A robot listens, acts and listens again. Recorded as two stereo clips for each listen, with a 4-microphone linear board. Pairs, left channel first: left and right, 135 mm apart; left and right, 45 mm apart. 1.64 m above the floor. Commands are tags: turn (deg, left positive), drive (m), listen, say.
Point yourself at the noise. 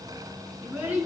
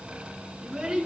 <turn deg="-30"/>
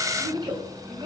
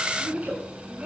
<turn deg="-145"/>
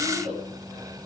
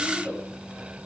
<turn deg="-55"/>
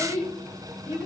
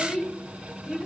<turn deg="-25"/>
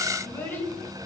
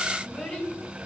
<turn deg="15"/>
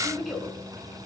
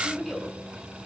<say>Facing the child speaking, over 4 m away.</say>